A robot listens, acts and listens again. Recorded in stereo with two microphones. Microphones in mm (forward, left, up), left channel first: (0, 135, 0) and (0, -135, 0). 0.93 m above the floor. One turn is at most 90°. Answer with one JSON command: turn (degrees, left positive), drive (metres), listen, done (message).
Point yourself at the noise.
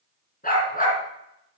{"turn": 30}
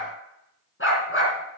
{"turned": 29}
{"turn": 90}
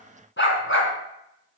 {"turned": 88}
{"turn": 50}
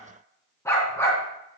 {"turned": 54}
{"turn": 10}
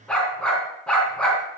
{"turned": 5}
{"done": "Found it: a dog barking, straight ahead."}